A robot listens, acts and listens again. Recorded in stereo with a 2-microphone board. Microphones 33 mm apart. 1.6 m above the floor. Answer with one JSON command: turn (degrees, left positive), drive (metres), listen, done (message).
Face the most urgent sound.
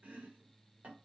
{"listen": true}
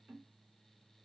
{"listen": true}
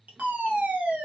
{"turn": -65}
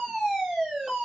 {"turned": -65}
{"turn": -15}
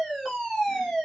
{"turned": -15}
{"done": "Facing the fire alarm, 1 to 2 m away."}